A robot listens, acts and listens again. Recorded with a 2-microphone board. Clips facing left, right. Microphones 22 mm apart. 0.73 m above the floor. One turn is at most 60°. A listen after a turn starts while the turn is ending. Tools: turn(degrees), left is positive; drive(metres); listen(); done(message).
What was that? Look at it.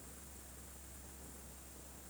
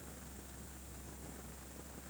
listen()
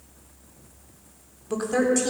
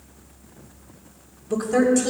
turn(degrees=30)
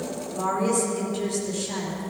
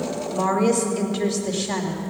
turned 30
turn(degrees=-40)
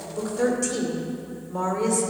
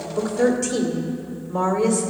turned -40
turn(degrees=-10)
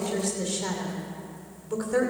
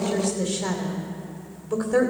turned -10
done("Found it: a woman speaking, straight ahead.")